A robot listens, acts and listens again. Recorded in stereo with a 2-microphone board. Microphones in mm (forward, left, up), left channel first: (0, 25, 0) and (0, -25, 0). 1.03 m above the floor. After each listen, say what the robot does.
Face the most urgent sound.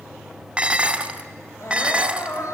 Turn 75° left.
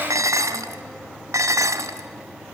Keep listening.
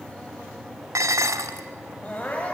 Turn 30° left.
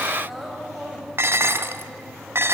Found it: crying, straight ahead, 2 to 4 m away.